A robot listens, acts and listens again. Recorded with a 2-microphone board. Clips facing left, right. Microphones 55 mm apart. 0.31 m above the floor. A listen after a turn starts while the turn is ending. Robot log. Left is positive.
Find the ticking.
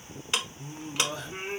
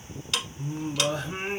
note: The ticking: about 30° left or 150° left.
cmd yaw +30
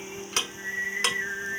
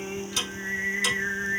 cmd idle
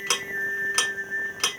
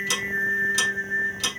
note: So it is at 120° left.
cmd yaw +120
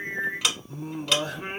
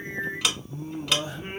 cmd idle
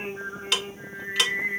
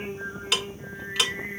end: Facing the ticking, under 1 m away.